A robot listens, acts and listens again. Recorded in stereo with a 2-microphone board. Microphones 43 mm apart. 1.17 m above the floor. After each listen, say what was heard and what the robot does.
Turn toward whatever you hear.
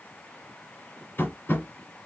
The tapping: about 50° left or 130° left. Turn 50° left.
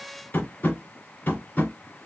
So it is at 65° left. Turn 65° left.
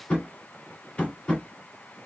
The tapping is now 30° left. Turn 30° left.
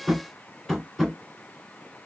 Found it: tapping, straight ahead.